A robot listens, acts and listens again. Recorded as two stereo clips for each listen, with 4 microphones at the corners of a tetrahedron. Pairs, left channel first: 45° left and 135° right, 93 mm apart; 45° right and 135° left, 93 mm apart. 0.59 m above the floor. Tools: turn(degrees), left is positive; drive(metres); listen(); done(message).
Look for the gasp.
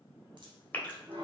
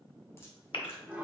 turn(degrees=-25)
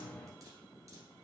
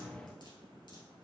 done("I heard a gasp from this way, but can't make it out now.")